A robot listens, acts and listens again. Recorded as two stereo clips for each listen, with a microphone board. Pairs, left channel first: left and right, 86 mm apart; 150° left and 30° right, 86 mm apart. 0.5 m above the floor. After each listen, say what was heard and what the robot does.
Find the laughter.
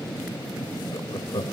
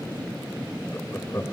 The laughter: 100° left. Turn 100° left.
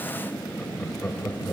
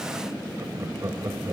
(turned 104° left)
The laughter is now 25° left. Turn 25° left.
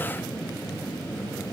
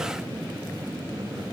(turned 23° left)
Keep listening.
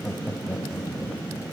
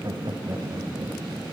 The laughter is now 15° left. Turn 15° left.
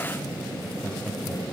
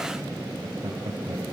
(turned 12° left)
Found it: laughter, straight ahead.